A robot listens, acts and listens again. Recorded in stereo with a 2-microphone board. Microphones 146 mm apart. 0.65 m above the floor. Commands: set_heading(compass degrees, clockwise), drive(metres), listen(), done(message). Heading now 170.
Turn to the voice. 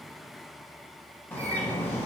set_heading(140)
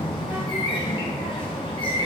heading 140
set_heading(160)
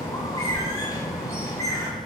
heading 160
done("Found it: a child speaking, straight ahead, 1 to 2 m away.")